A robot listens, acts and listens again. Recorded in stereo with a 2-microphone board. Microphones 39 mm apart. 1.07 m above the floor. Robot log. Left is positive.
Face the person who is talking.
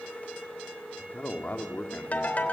note: The man speaking: about 45° left or 135° left.
cmd yaw +45
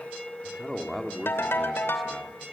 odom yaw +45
end: Found it: a man speaking, straight ahead.